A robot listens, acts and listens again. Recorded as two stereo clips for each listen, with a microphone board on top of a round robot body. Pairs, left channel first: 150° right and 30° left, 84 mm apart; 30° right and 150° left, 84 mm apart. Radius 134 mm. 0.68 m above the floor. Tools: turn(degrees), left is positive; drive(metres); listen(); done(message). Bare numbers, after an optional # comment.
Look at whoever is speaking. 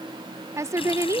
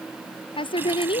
# The woman speaking: 25° right.
turn(-25)
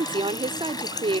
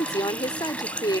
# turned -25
# The woman speaking is now 15° left.
turn(15)
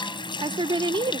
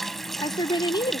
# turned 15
done("Found it: a woman speaking, straight ahead.")